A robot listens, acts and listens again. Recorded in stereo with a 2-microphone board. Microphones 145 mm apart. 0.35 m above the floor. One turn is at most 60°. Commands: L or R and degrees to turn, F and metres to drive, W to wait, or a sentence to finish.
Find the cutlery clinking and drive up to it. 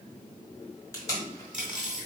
R30
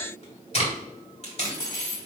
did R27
L25
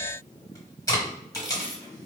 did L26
F1.0
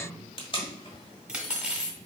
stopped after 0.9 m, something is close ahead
R10
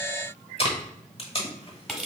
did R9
I am next to the cutlery clinking.